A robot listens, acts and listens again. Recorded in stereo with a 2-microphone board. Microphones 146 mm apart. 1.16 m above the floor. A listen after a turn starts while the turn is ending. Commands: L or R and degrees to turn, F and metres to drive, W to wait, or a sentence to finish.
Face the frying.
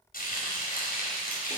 L75
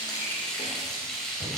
Facing the frying, over 4 m away.